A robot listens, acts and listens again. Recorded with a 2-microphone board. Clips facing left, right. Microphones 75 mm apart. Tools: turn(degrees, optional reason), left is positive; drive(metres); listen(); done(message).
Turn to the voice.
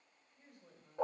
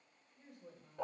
turn(degrees=-20, reason="The woman speaking: about 20° right or 160° right.")
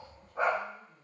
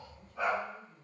turn(degrees=-135, reason="So it is at 135° right.")
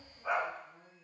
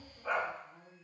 done("Facing the woman speaking.")